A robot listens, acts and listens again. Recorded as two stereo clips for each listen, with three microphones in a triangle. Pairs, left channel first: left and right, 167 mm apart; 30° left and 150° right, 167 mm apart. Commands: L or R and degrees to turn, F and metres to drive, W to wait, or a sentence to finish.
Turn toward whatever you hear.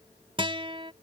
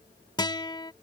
R35
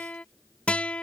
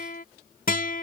Facing the guitar.